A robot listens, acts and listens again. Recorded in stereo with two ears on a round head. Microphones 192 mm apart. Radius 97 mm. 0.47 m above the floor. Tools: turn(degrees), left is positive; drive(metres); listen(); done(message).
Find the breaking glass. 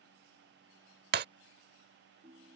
turn(degrees=-50)
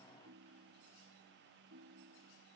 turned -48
listen()
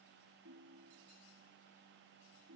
done("I heard breaking glass, but can't make it out now. It was about straight ahead or 85° right.")